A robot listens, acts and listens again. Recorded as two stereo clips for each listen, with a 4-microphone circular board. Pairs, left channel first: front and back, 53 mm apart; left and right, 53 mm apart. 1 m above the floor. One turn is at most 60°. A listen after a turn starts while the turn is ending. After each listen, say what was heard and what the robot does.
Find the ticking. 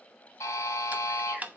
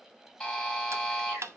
The ticking: 120° right. Turn 60° right.
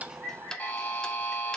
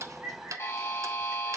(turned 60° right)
The ticking is now 75° right. Turn 60° right.
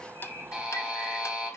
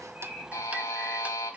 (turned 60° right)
Nothing new. It was at 15° right. Turn 15° right.
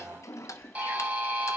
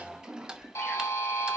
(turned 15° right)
The ticking is now 15° right. Turn 15° right.
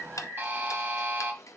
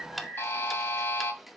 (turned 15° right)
Facing the ticking, under 1 m away.